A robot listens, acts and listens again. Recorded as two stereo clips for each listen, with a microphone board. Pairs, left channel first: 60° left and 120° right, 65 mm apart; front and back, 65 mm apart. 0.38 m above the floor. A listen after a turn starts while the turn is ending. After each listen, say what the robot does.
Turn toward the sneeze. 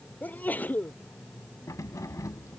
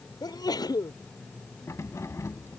Facing the sneeze.